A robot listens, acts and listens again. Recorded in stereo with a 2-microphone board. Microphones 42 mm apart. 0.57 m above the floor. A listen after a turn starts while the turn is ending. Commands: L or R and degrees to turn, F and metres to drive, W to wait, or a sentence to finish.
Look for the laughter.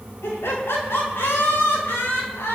L90
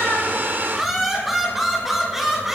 Facing the laughter.